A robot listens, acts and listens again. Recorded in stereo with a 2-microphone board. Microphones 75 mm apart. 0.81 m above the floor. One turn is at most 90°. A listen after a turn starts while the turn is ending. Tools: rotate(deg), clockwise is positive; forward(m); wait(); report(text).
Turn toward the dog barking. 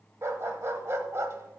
rotate(40)
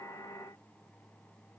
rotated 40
wait()
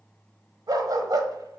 rotate(90)
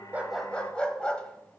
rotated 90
rotate(-15)
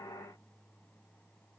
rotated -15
wait()
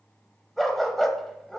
report("Found it: a dog barking, straight ahead.")